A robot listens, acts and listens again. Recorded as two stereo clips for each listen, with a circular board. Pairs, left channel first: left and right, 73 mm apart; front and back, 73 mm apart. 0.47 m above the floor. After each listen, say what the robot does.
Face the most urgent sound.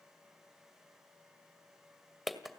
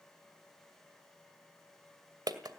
Keep listening.
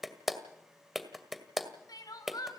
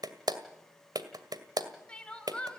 Turn 75° left.
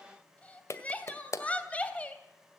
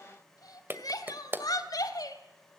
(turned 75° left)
Turn 20° left.
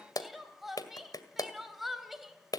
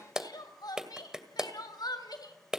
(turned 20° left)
Found it: crying, straight ahead.